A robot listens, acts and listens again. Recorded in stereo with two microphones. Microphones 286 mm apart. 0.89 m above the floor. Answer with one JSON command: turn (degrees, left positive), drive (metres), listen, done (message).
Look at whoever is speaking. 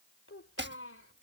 {"turn": 50}
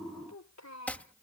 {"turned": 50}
{"turn": 65}
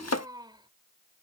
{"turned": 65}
{"turn": -15}
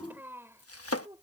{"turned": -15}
{"turn": -15}
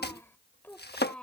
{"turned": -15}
{"done": "Facing the child speaking."}